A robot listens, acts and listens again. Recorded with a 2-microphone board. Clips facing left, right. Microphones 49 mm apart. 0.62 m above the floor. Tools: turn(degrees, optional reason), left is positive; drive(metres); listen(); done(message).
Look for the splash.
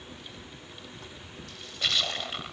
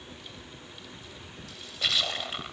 turn(degrees=30)
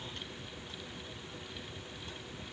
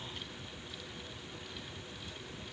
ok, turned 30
listen()
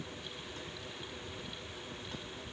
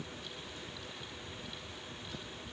done("I heard a splash, but can't make it out now. It was about 30° right or 150° left.")